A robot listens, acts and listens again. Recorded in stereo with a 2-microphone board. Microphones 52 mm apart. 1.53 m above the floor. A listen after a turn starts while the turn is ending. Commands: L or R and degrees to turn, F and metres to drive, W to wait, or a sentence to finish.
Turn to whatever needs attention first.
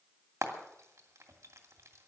W
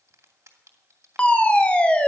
L25
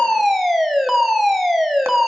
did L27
Facing the fire alarm, 1 to 2 m away.